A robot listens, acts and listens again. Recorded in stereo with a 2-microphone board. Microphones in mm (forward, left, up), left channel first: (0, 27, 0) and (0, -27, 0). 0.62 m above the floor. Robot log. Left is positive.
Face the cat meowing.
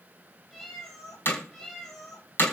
cmd yaw +30
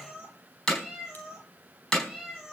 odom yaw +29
end: Facing the cat meowing, over 4 m away.